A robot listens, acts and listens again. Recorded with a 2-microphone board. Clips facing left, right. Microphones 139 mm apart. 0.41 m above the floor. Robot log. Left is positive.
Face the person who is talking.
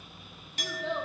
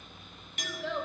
note: The child speaking: about 30° left or 150° left.
cmd yaw +30
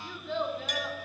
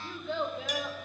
end: Found it: a child speaking, straight ahead, 2 to 4 m away.